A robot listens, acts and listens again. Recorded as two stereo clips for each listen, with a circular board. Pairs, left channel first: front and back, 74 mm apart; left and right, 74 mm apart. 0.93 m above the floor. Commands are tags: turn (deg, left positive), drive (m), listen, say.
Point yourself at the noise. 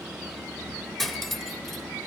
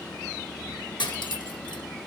<turn deg="85"/>
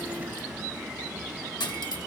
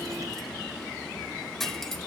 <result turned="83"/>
<say>Found it: cutlery clinking, straight ahead, 1 to 2 m away.</say>